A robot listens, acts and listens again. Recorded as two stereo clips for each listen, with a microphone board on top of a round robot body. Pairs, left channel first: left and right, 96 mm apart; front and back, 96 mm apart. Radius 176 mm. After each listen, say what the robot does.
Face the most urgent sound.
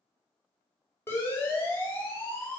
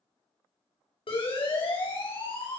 Turn 25° left.
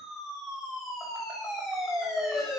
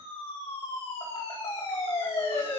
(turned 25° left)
Found it: a siren, straight ahead.